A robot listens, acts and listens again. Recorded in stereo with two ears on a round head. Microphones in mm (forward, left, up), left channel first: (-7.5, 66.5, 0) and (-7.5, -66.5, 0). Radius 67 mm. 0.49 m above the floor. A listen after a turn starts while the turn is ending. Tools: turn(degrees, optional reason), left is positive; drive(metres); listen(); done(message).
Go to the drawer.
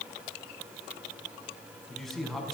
listen()
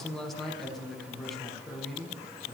listen()
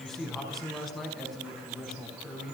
done("I can't make out a drawer to turn to.")